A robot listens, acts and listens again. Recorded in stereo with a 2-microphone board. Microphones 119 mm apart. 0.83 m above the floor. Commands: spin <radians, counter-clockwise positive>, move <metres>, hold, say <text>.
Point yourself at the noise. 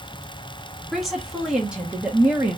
spin -0.26
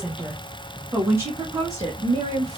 spin -0.52
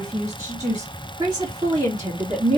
spin -0.44
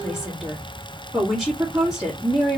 say Found it: a woman speaking, straight ahead.